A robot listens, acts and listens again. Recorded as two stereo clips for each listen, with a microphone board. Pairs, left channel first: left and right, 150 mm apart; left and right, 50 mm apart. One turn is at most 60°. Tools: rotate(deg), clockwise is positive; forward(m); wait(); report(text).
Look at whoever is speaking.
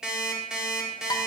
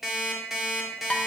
wait()
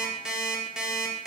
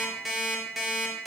wait()
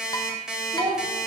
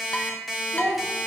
rotate(35)
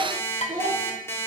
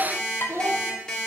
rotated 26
rotate(60)
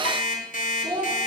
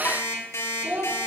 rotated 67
rotate(30)
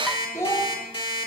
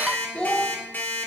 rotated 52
rotate(-15)
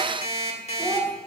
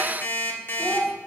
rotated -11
rotate(-10)
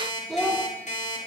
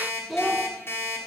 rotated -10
report("Found it: a child speaking, straight ahead, 1 to 2 m away.")